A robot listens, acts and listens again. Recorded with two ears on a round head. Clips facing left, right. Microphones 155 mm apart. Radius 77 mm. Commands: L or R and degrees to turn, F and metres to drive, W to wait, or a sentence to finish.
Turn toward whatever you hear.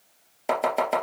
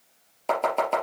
L30
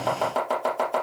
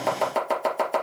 R25
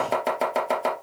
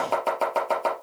L10
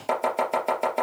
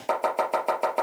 Found it: chopping, straight ahead.